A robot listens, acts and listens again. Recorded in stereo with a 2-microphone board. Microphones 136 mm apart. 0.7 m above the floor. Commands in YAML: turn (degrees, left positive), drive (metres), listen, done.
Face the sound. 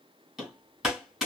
turn: 30
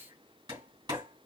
turn: -30
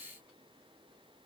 listen: true
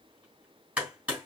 turn: -10
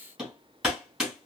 done: "Found it: hammering, straight ahead, 2 to 4 m away."